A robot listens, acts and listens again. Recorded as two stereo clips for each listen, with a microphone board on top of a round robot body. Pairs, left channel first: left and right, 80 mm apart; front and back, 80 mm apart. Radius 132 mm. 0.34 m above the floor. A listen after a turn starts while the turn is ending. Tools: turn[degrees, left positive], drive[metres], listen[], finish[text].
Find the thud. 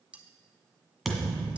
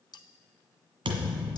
Thought: The thud: straight behind.
Action: turn[180]
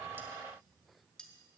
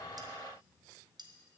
Action: finish[I heard a thud from this way, but can't make it out now.]